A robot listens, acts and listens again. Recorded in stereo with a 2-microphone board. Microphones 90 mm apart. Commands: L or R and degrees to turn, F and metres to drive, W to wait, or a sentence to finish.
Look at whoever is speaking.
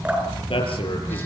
L90
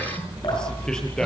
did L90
L10
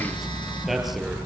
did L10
Found it: a man speaking, straight ahead.